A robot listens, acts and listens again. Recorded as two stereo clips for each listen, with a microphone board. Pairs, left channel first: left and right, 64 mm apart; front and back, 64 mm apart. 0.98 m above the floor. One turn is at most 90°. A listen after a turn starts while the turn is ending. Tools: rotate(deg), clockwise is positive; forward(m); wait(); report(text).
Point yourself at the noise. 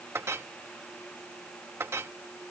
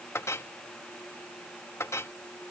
rotate(45)
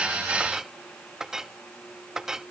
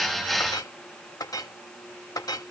rotate(10)
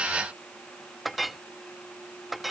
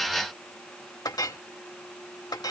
report("Found it: a clink, straight ahead.")